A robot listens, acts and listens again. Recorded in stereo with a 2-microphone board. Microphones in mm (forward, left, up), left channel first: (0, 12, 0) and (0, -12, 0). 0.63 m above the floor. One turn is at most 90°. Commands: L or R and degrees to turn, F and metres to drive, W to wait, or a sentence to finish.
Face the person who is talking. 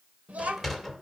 R65
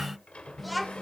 Found it: a child speaking, straight ahead.